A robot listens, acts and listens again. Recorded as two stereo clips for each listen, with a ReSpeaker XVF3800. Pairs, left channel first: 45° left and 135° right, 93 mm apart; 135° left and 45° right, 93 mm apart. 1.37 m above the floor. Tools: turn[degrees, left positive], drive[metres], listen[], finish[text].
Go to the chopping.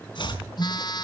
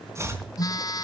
Thought: The chopping: 15° left.
Action: turn[15]
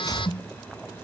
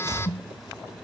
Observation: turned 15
Action: drive[1.0]
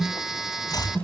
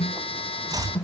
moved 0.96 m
Action: drive[1.0]
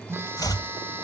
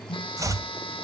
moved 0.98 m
Action: drive[1.0]
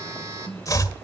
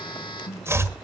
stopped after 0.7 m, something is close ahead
Action: finish[I am next to the chopping.]